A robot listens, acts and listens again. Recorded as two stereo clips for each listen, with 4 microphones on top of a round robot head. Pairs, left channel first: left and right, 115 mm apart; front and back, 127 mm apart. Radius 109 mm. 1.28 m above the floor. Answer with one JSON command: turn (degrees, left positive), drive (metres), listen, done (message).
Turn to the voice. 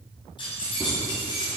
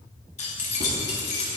{"listen": true}
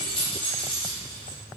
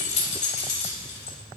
{"listen": true}
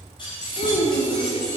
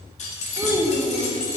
{"turn": 110}
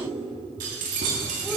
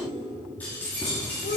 {"done": "Found it: a child speaking, straight ahead."}